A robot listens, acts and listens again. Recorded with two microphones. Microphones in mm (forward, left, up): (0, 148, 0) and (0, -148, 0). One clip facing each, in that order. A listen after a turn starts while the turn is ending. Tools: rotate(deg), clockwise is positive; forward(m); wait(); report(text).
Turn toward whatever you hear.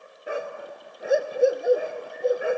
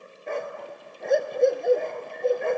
rotate(-30)
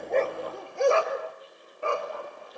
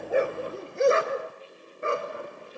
rotate(20)
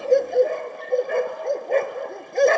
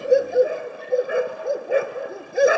report("Facing the dog barking, 1 to 2 m away.")